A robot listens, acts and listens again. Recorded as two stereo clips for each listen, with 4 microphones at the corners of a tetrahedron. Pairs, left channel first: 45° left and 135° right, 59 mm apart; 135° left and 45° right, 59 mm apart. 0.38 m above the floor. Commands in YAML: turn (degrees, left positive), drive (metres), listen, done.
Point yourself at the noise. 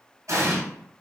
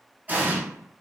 turn: -110
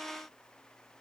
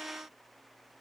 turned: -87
turn: -20
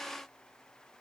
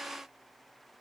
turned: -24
done: "Facing where the explosion came from. I can't hear it now."